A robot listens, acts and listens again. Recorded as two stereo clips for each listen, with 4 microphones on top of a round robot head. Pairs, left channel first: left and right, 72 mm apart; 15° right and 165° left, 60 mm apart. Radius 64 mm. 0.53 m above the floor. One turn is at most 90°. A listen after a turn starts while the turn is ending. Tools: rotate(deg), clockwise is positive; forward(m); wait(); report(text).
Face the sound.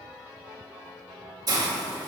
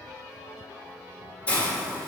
rotate(80)
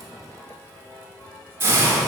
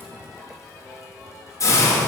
rotate(40)
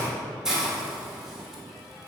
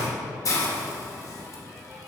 report("Facing the hiss, 1 to 2 m away.")